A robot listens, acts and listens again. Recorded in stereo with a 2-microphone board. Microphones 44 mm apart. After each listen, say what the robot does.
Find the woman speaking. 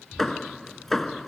Keep listening.
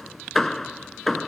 Keep listening.
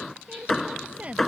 Turn 30° right.
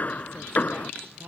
Turn 115° right.
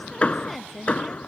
Facing the woman speaking.